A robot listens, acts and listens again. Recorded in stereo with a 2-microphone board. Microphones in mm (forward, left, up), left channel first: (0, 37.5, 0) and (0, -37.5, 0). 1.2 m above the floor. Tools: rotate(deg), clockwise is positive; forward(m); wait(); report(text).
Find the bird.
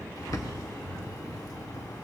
rotate(-55)
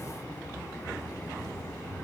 rotate(-65)
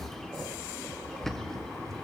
report("Facing the bird.")